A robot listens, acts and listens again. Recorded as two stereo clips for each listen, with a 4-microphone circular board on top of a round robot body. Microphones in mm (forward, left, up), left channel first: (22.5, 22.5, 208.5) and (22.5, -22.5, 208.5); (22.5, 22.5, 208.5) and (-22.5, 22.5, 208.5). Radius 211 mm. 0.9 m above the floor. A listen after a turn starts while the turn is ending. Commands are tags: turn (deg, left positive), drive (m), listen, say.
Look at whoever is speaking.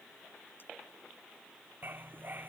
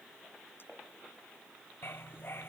<listen/>
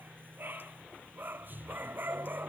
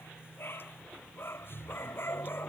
<listen/>
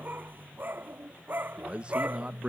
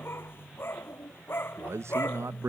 <turn deg="-155"/>
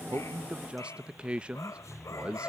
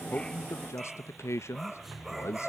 <turn deg="-20"/>
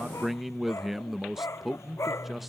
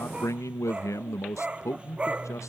<say>Found it: a man speaking, straight ahead.</say>